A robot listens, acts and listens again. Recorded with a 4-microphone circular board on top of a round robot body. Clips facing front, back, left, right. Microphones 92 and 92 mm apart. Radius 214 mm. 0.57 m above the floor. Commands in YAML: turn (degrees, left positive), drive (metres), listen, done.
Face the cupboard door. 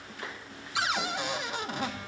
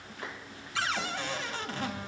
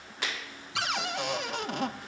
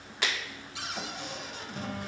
turn: 75
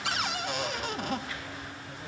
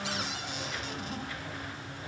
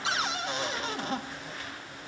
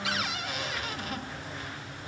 turn: 30
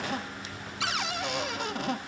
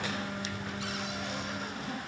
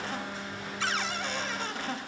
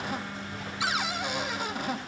turn: -15
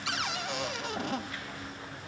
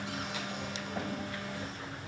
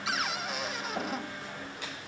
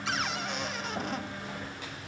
done: "Facing the cupboard door."